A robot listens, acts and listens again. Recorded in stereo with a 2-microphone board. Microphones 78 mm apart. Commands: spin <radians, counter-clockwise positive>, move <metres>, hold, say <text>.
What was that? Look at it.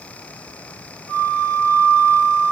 spin 0.87
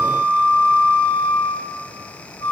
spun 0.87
spin 1.48
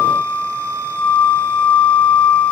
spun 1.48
spin 0.35
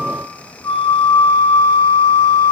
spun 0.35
spin 0.17
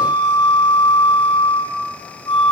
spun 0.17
say Facing the flute, 1 to 2 m away.